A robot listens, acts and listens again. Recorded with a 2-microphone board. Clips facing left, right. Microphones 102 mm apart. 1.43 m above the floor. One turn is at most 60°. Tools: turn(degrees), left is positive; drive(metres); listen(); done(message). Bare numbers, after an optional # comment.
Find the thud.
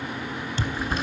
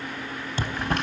# The thud: about 45° right or 135° right.
turn(-45)
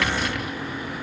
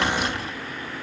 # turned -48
listen()
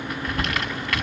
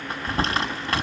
done("I heard a thud, but can't make it out now. It was about 5° left or 90° right.")